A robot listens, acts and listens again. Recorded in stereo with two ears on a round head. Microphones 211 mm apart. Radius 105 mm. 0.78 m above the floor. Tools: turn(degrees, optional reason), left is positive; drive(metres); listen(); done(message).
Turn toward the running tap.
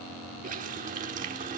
turn(degrees=-35, reason="The running tap: about 35° right or 145° right.")
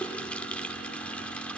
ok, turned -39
done("Found it: a running tap, straight ahead.")